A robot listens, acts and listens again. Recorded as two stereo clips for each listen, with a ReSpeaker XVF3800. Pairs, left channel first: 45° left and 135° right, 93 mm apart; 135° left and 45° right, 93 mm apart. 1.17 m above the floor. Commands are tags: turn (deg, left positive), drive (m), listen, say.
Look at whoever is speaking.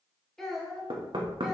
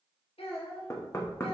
<turn deg="135"/>
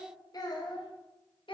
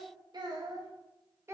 <turn deg="20"/>
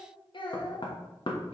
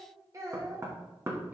<turn deg="20"/>
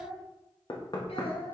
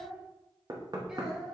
<turn deg="40"/>
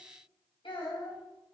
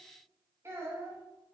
<turn deg="15"/>
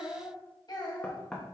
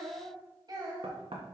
<say>Facing the child speaking.</say>